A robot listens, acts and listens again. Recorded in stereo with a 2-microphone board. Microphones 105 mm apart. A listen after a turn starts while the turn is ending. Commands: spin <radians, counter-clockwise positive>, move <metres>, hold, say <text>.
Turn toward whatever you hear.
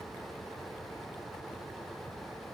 hold
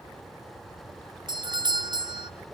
spin -0.70
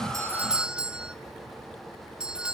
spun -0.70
spin -0.17
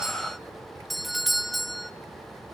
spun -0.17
say Facing the doorbell.